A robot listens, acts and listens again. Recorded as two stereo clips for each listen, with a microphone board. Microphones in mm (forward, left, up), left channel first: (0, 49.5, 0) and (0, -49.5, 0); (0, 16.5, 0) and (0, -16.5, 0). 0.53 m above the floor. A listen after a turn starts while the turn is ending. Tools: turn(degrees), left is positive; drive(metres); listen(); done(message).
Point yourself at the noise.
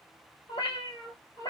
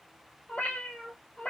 turn(degrees=40)
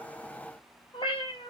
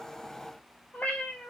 turn(degrees=125)
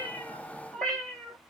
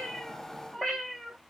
turn(degrees=10)
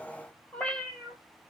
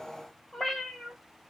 turn(degrees=10)
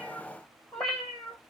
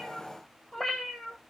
done("Found it: a cat meowing, straight ahead, 1 to 2 m away.")